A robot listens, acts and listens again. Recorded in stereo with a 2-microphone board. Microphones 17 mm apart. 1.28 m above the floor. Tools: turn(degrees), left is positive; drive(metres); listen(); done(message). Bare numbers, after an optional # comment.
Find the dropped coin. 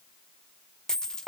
# The dropped coin: about 30° left or 150° left.
turn(30)
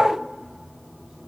listen()
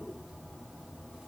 done("I heard a dropped coin, but can't make it out now. It was about straight ahead or 120° left.")